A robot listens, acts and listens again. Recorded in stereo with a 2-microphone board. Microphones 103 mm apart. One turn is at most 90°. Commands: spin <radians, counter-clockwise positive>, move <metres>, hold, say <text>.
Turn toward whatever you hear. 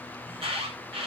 spin -1.05
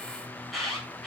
say Found it: an alarm, straight ahead, over 4 m away.